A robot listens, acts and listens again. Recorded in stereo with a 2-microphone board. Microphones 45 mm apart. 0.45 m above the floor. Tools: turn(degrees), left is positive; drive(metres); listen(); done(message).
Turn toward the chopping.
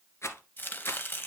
turn(degrees=50)
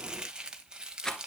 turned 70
turn(degrees=-20)
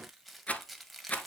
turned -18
done("Found it: chopping, straight ahead.")